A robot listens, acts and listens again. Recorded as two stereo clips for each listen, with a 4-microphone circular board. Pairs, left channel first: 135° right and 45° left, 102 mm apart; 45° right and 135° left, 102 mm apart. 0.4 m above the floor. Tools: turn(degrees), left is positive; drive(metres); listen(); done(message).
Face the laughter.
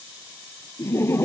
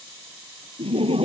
turn(degrees=160)
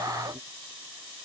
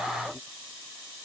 listen()
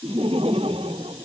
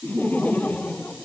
turn(degrees=30)
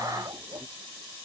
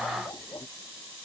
done("Found it: laughter, straight ahead.")